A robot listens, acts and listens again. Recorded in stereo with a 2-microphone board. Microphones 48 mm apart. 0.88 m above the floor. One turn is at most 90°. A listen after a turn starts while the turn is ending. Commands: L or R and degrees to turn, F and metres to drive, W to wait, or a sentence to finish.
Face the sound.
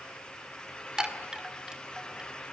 R30
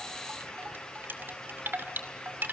R90
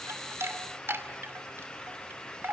R55
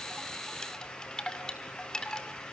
L15
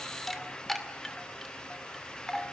Facing the chime.